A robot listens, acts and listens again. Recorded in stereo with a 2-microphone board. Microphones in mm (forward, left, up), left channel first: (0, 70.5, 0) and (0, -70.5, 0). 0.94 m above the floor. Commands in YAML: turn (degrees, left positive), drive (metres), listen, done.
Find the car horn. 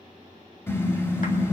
turn: 20
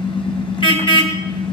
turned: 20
turn: 140
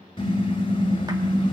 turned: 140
turn: 40
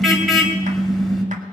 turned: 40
done: "Found it: a car horn, straight ahead, 2 to 4 m away."